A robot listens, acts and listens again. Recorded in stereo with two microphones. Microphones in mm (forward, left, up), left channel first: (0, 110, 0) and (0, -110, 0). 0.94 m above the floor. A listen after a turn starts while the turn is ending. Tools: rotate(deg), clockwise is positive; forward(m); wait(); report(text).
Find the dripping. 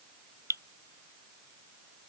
rotate(30)
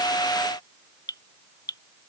rotate(-15)
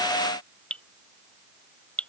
report("Facing the dripping.")